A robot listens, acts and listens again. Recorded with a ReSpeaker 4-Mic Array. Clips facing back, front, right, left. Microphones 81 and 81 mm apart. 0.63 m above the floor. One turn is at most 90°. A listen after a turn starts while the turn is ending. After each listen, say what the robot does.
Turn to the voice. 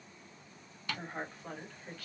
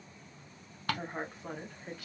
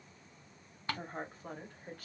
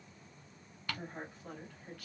Turn 60° right.
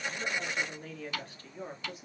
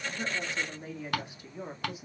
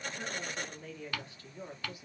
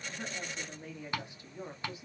Turn 85° left.
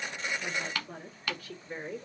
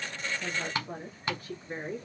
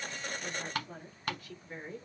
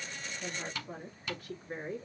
Turn 45° left.
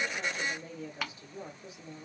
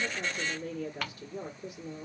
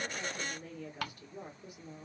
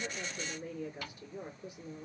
Turn 15° left.
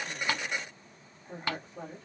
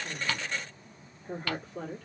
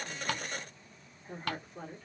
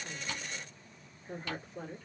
Found it: a woman speaking, straight ahead, 1 to 2 m away.